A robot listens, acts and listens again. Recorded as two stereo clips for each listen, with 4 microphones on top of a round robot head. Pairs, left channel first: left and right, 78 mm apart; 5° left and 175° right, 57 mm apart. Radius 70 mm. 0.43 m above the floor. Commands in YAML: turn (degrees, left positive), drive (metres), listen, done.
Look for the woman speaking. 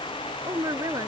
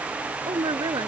turn: -150
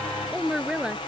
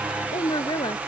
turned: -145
turn: -10
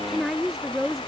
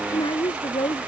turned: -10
done: "Facing the woman speaking."